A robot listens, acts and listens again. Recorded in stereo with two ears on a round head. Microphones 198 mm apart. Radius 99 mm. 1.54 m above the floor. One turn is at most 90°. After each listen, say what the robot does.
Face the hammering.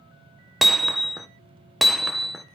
Turn 30° left.
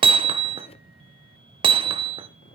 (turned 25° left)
Turn 25° right.
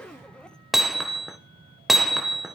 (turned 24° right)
Found it: hammering, straight ahead.